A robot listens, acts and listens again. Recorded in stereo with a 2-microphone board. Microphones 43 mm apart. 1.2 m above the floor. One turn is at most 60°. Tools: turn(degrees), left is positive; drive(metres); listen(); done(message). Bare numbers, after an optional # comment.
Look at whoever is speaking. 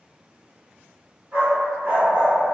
listen()
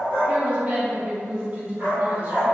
# The woman speaking: about 35° right or 145° right.
turn(-35)
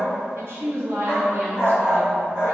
# So it is at 115° right.
turn(-60)
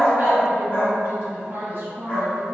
# The woman speaking is now 50° right.
turn(-50)
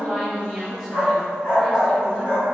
done("Found it: a woman speaking, straight ahead, under 1 m away.")